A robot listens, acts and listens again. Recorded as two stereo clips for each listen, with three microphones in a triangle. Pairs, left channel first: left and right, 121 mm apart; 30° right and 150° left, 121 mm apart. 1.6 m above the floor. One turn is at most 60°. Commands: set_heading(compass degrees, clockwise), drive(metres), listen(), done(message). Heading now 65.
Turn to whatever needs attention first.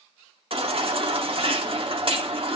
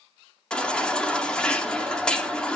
set_heading(125)
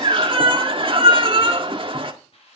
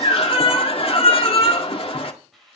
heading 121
set_heading(176)
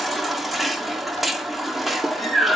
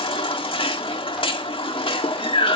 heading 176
done("Facing the baby crying, 1 to 2 m away.")